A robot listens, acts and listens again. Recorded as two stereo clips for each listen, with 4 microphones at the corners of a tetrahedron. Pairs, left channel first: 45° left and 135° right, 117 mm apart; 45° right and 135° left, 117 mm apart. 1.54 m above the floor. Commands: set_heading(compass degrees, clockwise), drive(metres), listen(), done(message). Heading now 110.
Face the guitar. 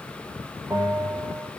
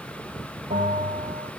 listen()
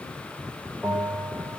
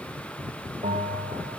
listen()
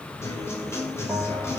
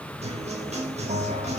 set_heading(355)
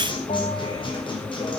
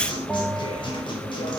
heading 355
done("Found it: a guitar, straight ahead.")